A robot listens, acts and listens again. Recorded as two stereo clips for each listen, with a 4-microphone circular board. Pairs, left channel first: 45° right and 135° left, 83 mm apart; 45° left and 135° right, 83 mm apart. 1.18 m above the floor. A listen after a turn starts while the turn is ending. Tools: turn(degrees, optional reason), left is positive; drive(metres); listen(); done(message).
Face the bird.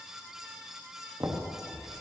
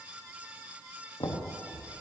turn(degrees=-105, reason="The bird: 105° right.")
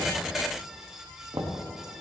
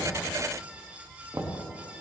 turn(degrees=-10, reason="The bird is now 10° right.")
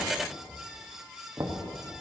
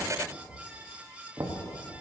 done("Found it: a bird, straight ahead, 2 to 4 m away.")